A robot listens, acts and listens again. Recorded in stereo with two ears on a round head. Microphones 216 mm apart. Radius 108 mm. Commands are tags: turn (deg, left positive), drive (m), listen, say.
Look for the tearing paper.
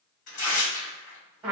<turn deg="40"/>
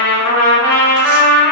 <listen/>
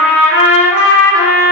<listen/>
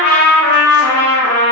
<say>I heard tearing paper, but can't make it out now. It was about straight ahead or 100° left.</say>